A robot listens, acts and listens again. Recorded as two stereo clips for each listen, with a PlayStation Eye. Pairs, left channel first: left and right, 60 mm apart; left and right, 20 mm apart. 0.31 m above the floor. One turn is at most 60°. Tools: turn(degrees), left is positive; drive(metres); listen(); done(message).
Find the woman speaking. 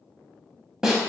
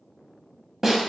listen()
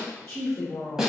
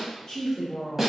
turn(degrees=30)
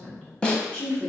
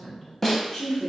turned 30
turn(degrees=30)
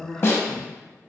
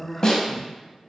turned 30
turn(degrees=30)
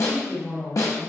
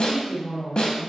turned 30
turn(degrees=30)
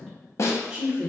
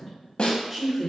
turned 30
turn(degrees=30)
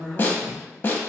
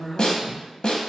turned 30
turn(degrees=-15)
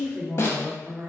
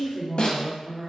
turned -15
done("Found it: a woman speaking, straight ahead.")